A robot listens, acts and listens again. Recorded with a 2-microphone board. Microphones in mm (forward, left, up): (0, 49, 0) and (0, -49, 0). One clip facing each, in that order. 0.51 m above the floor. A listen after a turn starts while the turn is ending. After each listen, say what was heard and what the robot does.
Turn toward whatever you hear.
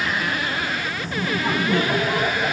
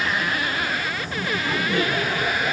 Turn 90° left.
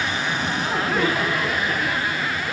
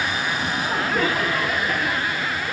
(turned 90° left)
Found it: laughter, straight ahead, over 4 m away.